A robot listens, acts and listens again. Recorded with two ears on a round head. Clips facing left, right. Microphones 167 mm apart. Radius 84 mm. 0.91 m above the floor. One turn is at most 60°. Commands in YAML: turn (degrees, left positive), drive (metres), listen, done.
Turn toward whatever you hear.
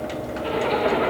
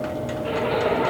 turn: 60
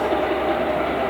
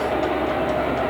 turn: 40
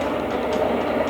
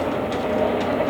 turn: -10
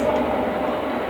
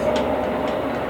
done: "Found it: a zipper, straight ahead."